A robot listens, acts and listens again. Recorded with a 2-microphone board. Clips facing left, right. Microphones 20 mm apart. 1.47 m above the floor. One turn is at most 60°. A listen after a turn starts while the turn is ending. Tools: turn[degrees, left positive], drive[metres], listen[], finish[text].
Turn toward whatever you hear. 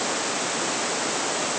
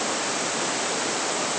Action: listen[]
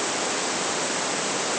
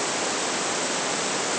Action: listen[]
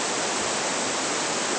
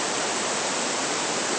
Action: finish[I can't make out anything.]